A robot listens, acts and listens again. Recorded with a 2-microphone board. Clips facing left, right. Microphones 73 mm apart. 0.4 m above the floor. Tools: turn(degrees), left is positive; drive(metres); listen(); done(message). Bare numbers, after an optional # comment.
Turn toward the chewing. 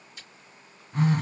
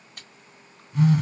# The chewing: about 55° right or 125° right.
turn(-55)
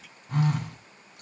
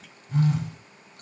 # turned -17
listen()
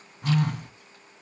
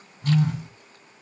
listen()
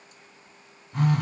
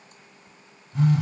done("I heard chewing, but can't make it out now. It was about 35° right or 110° right.")